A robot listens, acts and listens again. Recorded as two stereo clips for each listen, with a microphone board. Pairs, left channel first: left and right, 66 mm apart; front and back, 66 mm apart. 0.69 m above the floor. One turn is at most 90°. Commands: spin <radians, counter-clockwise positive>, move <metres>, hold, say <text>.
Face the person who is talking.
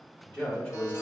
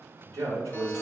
spin 1.57
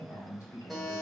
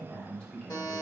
spin 1.31
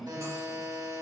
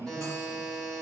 spin -0.35
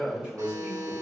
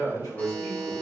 spin -0.35
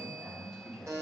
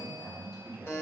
say Facing the man speaking.